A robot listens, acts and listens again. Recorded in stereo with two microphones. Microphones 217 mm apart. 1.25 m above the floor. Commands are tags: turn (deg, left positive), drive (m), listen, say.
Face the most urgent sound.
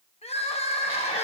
<turn deg="30"/>
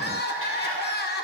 <turn deg="120"/>
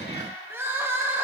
<turn deg="-10"/>
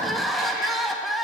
<say>Facing the crying, under 1 m away.</say>